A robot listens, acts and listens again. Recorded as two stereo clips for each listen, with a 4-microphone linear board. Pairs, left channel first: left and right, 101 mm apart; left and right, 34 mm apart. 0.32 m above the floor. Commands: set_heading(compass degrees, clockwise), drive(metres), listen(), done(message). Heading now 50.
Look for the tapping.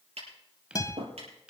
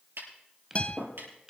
set_heading(140)
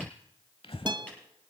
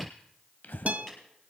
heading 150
set_heading(140)
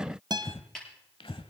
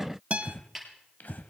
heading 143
done("Facing the tapping, over 4 m away.")